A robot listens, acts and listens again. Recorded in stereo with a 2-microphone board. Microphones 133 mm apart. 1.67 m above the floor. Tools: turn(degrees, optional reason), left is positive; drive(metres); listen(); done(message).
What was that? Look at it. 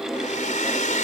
turn(degrees=90)
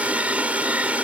turn(degrees=-10, reason="So it is at 10° right.")
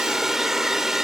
done("Facing the hair dryer.")